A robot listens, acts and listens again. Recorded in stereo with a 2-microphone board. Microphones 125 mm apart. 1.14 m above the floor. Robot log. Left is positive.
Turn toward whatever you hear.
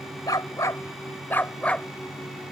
cmd yaw +30
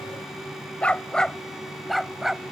cmd yaw -30
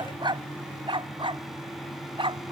note: So it is at 135° right.
cmd yaw -135
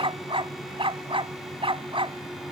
note: The dog barking is now 45° right.
cmd yaw -45
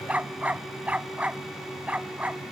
note: The dog barking is now 10° right.
cmd yaw -10
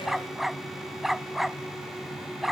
end: Found it: a dog barking, straight ahead.